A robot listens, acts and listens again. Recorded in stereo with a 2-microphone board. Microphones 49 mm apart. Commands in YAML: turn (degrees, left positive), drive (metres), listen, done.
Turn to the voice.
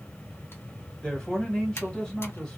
turn: 20
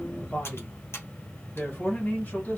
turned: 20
turn: 140
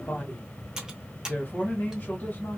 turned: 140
turn: 40
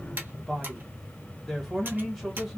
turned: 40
done: "Facing the man speaking."